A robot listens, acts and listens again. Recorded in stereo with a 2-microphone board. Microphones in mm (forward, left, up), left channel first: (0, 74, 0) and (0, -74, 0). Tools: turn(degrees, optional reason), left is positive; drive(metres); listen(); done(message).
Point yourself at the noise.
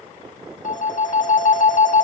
turn(degrees=60, reason="The phone ringing: about 60° left or 120° left.")
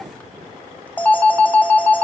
turn(degrees=10, reason="So it is at 10° left.")
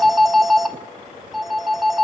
done("Found it: a phone ringing, straight ahead, under 1 m away.")